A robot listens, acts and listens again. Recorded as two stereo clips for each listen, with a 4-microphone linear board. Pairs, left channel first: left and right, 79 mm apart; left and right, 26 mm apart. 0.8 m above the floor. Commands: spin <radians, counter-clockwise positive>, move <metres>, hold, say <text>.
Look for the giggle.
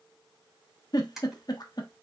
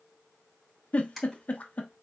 spin 0.96
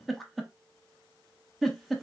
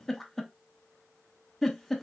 say Found it: a giggle, straight ahead.